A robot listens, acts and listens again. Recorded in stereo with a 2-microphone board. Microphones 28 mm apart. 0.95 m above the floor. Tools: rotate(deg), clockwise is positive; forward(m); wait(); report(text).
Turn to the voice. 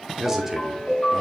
rotate(30)
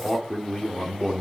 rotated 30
rotate(-20)
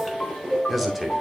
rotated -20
report("Found it: a man speaking, straight ahead, 2 to 4 m away.")